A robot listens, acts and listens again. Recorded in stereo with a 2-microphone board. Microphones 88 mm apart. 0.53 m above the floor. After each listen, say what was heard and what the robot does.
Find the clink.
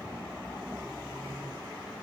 Keep listening.
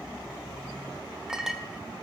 Turn 30° right.
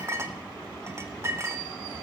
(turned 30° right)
So it is at 145° right. Turn 145° right.
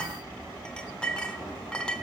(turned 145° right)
The clink is now 15° left. Turn 15° left.
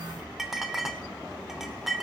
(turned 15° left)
Found it: a clink, straight ahead.